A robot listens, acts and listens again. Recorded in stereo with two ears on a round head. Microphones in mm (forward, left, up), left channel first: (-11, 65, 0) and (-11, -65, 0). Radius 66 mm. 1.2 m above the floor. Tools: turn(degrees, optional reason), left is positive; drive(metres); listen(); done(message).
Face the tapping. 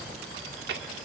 listen()
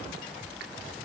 listen()
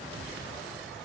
done("I can't make out tapping to turn to.")